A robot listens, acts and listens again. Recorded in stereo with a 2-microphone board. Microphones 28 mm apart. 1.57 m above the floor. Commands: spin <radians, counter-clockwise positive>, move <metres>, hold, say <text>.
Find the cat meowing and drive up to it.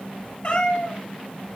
spin 0.44
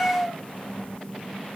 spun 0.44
move 1.0
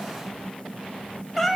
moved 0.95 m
move 1.0
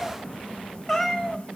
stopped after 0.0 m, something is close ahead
say Arrived at the cat meowing, straight ahead.